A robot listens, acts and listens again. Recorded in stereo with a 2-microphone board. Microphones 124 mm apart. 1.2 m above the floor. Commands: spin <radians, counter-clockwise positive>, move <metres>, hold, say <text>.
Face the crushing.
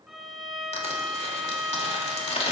spin 0.96
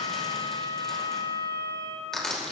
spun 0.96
say Found it: crushing, straight ahead.